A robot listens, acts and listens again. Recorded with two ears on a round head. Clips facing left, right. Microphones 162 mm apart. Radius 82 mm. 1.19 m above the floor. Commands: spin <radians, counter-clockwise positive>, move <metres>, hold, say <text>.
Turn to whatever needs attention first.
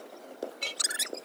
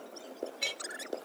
hold
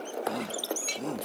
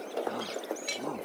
spin 0.44
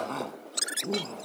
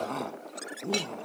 say Facing the shout.